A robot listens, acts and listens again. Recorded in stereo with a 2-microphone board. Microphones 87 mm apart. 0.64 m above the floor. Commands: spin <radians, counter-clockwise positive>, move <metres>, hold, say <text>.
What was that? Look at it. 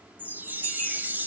spin -0.35
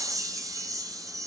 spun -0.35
spin -2.44
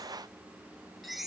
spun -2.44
say Facing the chime, 2 to 4 m away.